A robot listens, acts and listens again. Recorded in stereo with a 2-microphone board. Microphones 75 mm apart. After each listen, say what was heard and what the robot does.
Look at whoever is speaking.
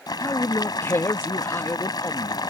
The man speaking: about 30° left or 150° left. Turn 30° left.
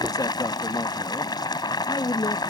So it is at 115° left. Turn 115° left.
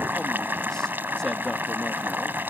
Keep listening.
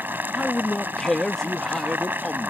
The man speaking is now 10° left. Turn 10° left.
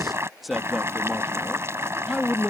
Found it: a man speaking, straight ahead.